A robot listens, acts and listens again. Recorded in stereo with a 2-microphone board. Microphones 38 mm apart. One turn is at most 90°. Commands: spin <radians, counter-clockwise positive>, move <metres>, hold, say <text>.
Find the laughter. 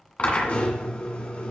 hold
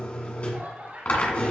spin -0.87
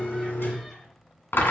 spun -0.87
hold
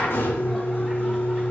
hold
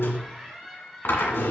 say Facing the laughter, over 4 m away.